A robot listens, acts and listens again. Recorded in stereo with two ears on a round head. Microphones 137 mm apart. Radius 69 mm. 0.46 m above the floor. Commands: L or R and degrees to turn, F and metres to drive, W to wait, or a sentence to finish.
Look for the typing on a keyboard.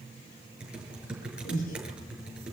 R30
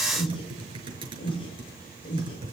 R145
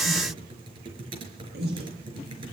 R35
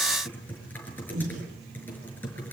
L10
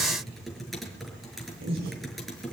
Found it: typing on a keyboard, straight ahead.